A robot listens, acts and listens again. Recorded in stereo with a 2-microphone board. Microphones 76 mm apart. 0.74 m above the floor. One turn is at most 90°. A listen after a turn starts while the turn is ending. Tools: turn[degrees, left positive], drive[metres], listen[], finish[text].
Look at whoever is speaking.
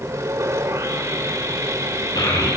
Thought: The child speaking: about 60° left or 120° left.
Action: turn[60]
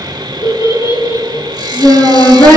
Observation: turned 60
Thought: So it is at 60° left.
Action: turn[60]
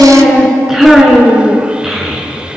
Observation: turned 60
Action: finish[Facing the child speaking, over 4 m away.]